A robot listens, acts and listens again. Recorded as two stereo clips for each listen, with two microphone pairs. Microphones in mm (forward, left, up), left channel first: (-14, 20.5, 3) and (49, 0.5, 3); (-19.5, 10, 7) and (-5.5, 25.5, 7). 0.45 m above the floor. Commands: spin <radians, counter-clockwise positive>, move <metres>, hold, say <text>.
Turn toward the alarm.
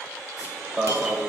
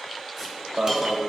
spin 1.13
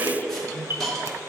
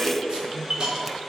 spin 0.44
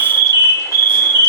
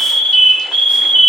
spin -0.17
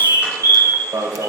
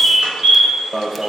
say Facing the alarm.